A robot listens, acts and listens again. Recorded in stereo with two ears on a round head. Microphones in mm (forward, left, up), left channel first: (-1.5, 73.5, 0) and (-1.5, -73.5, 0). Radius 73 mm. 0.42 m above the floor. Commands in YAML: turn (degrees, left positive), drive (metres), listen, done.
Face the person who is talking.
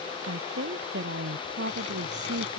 turn: -90
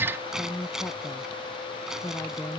turn: 15
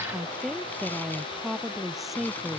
done: "Facing the woman speaking."